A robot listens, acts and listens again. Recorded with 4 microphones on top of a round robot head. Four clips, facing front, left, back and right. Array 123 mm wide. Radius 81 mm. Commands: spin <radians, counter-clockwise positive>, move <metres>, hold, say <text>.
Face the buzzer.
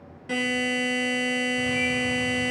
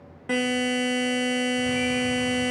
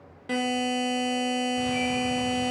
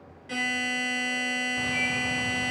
spin 2.09
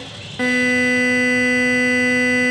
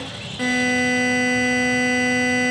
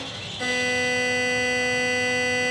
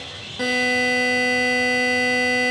spin -0.26
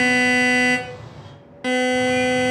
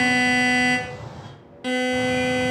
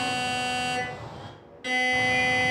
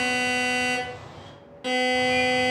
say Found it: a buzzer, straight ahead, 1 to 2 m away.